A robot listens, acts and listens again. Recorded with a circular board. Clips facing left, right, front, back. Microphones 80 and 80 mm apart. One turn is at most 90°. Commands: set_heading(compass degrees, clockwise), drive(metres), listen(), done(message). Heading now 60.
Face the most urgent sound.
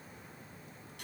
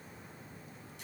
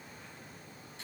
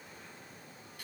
listen()
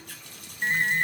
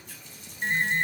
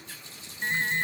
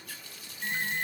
set_heading(35)
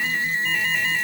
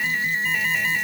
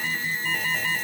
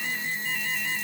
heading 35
done("Facing the alarm.")